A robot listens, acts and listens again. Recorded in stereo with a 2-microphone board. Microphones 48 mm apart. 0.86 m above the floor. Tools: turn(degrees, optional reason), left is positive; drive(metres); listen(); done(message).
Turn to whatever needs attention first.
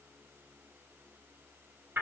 listen()
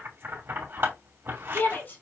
turn(degrees=45, reason="The shout: about 45° left or 135° left.")
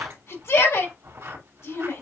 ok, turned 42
turn(degrees=90, reason="So it is at 90° left.")
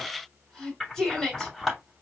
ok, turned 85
done("Found it: a shout, straight ahead, 2 to 4 m away.")